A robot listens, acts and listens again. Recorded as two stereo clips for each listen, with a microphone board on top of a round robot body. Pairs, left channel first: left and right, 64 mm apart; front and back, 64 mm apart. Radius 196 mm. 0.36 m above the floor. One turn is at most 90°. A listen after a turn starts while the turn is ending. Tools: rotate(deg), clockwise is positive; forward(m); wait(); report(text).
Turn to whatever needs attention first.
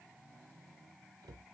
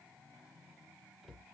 wait()
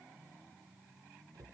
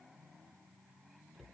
wait()
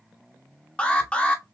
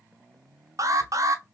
rotate(-90)
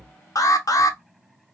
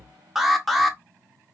rotate(-90)
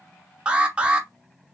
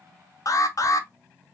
rotate(20)
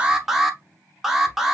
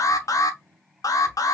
report("Found it: an alarm, straight ahead, 1 to 2 m away.")